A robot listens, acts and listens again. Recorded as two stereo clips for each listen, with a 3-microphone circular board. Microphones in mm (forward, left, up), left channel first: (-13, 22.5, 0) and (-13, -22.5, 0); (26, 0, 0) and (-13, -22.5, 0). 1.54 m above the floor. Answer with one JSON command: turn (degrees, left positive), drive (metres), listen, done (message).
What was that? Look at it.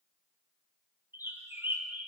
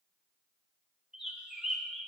{"turn": -70}
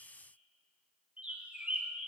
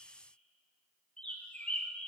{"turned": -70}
{"turn": -30}
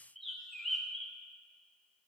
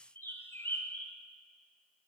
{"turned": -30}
{"done": "Facing the bird."}